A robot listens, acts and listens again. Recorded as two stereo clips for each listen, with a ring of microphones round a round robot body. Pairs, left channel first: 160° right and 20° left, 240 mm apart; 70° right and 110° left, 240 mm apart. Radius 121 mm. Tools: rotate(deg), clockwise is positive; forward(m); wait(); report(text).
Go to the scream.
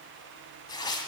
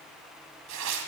wait()
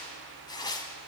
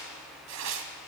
wait()
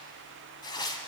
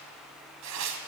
report("I can't make out a scream to turn to.")